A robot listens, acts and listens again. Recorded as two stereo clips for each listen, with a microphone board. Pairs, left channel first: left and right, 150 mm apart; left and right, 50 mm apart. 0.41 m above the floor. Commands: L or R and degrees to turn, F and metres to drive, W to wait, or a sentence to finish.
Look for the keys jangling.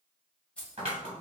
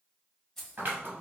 L30
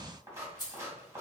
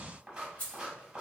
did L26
L145
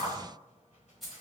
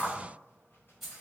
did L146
Facing the keys jangling.